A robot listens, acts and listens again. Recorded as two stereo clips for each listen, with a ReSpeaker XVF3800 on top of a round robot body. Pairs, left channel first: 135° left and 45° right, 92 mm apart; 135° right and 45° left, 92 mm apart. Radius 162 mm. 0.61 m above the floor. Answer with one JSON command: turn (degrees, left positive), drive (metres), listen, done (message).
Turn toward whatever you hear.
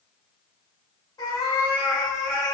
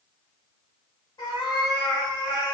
{"turn": -175}
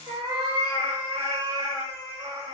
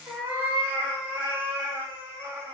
{"turn": -20}
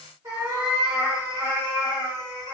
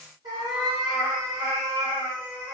{"done": "Facing the cat meowing."}